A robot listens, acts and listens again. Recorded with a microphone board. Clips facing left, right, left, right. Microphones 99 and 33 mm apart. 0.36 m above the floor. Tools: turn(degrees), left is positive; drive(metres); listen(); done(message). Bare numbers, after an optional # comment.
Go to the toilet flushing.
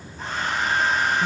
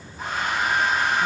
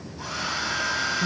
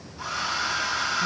listen()
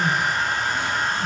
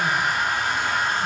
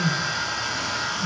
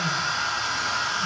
listen()
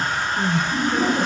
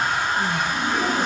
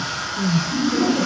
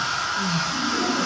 # The toilet flushing: about 50° left or 130° left.
turn(50)
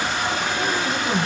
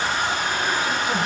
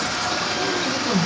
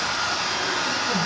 listen()
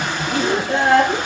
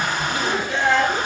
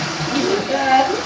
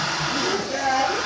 listen()
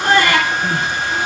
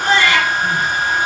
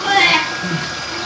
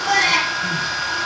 done("I heard a toilet flushing, but can't make it out now. It was about straight ahead or 80° left. I did not reach it.")